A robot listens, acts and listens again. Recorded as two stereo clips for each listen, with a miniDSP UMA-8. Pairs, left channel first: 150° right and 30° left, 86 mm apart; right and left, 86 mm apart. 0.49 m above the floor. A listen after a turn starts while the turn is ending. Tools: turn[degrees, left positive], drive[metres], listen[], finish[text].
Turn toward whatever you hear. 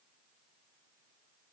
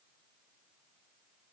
Action: listen[]
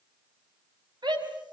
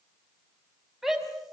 Action: finish[Facing the shout, over 4 m away.]